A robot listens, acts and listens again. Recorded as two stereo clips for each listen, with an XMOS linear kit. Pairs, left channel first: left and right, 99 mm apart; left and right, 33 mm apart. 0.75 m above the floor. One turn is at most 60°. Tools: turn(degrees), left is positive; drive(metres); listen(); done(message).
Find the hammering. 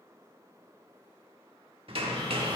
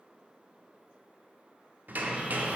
turn(degrees=-60)
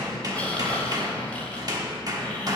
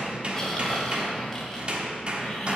turn(degrees=-40)
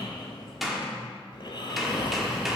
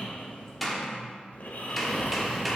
done("Facing the hammering.")